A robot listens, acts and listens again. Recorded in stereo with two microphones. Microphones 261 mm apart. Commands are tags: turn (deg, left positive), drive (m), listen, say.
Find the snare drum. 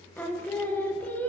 <listen/>
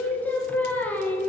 <listen/>
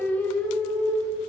<say>I can't make out a snare drum, only singing.</say>